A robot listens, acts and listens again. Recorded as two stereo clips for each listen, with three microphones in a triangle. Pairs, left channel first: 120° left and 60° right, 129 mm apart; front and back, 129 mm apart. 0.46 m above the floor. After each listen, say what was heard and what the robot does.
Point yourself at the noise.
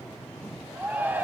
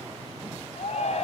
The shout: 15° left. Turn 15° left.
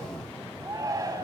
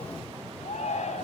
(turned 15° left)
Facing the shout, 2 to 4 m away.